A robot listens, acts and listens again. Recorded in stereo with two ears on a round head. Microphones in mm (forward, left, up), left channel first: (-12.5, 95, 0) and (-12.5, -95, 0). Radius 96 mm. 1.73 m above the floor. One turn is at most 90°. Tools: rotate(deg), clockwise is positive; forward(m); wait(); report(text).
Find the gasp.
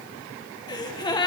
rotate(-20)
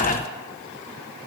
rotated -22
rotate(-90)
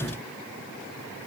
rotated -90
rotate(-50)
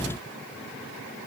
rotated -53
report("I heard a gasp from this way, but can't make it out now.")